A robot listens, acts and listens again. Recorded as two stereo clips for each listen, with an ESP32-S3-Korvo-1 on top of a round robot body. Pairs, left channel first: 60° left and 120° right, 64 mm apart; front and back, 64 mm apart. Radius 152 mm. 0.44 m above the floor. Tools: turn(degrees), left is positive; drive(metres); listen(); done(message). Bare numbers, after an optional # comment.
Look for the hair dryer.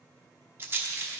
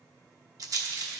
listen()
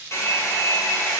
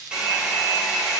# The hair dryer: 105° left.
turn(105)
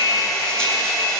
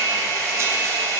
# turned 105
# The hair dryer is now 55° left.
turn(55)
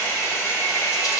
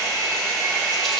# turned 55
done("Found it: a hair dryer, straight ahead, 1 to 2 m away.")